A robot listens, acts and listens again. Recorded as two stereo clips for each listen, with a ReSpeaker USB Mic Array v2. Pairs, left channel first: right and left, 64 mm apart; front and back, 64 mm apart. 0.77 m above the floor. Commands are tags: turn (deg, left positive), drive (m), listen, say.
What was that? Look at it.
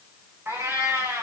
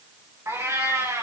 <turn deg="145"/>
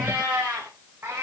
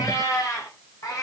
<turn deg="35"/>
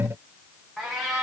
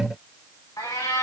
<say>Found it: a cat meowing, straight ahead, over 4 m away.</say>